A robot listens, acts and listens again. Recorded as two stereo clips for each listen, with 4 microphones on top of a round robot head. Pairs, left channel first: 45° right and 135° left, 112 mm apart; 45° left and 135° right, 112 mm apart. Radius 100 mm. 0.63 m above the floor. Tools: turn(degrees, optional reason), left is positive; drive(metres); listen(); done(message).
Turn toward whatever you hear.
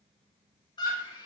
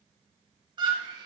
turn(degrees=-90, reason="The scream: 90° right.")
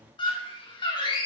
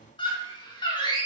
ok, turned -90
done("Found it: a scream, straight ahead, 2 to 4 m away.")